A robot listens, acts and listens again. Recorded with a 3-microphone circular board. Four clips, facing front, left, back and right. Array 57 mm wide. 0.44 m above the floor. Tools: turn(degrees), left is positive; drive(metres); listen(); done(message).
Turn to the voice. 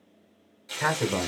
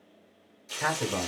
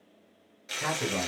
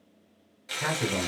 turn(degrees=30)
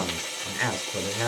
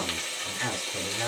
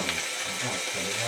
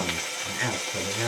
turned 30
done("Found it: a man speaking, straight ahead.")